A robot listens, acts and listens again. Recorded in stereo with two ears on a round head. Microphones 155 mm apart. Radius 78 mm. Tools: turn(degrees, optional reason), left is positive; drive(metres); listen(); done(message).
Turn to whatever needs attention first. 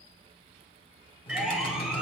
turn(degrees=-30)
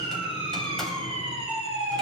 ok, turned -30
turn(degrees=-145, reason="So it is at 145° right.")
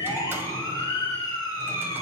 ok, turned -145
turn(degrees=25, reason="The siren is now 25° left.")
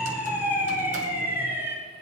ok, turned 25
turn(degrees=-15, reason="The siren is now 15° right.")
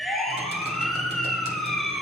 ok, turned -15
done("Facing the siren.")